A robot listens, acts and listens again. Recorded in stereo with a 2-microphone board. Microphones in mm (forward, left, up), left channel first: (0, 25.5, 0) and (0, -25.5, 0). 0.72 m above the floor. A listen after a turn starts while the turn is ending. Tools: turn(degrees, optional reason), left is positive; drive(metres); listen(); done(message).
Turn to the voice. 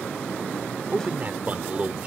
turn(degrees=-30, reason="The man speaking: about 30° right or 150° right.")
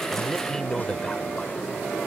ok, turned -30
turn(degrees=15, reason="So it is at 15° left.")
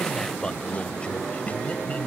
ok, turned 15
turn(degrees=30, reason="The man speaking is now 30° left.")
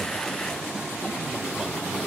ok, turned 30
listen()
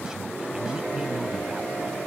listen()
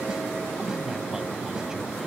done("I heard a man speaking from this way, but can't make it out now.")